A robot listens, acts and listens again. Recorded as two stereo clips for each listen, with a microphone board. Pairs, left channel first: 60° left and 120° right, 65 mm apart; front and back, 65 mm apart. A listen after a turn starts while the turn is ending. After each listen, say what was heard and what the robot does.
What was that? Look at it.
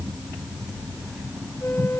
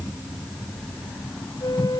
Found it: a flute, straight ahead.